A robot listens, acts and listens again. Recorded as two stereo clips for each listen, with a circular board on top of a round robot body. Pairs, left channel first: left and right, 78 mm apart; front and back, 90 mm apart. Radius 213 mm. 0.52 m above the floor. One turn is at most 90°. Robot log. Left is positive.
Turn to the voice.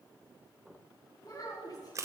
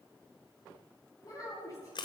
note: The child speaking: 50° left.
cmd yaw +50
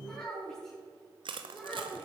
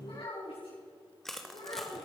note: The child speaking is now 15° left.
cmd yaw +15
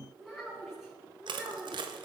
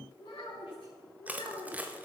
end: Found it: a child speaking, straight ahead, over 4 m away.